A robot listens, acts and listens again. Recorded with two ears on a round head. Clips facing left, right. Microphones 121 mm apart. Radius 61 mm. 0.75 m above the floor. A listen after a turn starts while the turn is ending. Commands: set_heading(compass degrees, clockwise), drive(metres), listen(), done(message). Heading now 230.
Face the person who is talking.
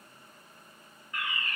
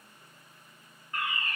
listen()
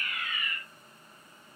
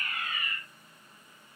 listen()
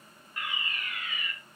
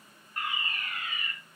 done("I can't make out anyone speaking, only a fire alarm.")